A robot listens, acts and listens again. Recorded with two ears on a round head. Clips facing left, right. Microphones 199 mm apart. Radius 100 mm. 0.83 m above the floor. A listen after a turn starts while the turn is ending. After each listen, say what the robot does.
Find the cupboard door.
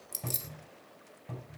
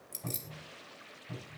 Turn 65° left.
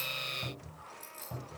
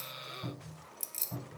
Turn 50° left.
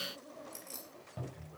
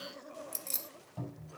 Turn 35° left.
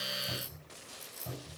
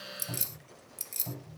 Turn 15° left.
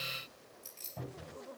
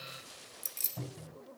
Facing the cupboard door.